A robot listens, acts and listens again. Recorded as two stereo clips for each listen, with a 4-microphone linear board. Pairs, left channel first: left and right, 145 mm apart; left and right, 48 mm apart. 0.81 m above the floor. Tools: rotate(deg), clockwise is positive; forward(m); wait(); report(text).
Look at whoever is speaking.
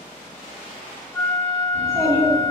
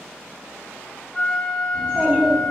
rotate(25)
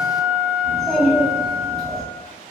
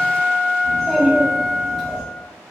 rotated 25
report("Facing the child speaking, 1 to 2 m away.")